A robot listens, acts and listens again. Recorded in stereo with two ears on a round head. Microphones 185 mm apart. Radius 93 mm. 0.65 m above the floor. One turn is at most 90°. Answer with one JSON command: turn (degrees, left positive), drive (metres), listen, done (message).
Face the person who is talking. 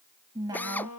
{"turn": -20}
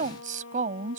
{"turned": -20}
{"turn": -90}
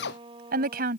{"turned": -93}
{"turn": -45}
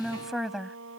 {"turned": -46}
{"done": "Found it: a woman speaking, straight ahead."}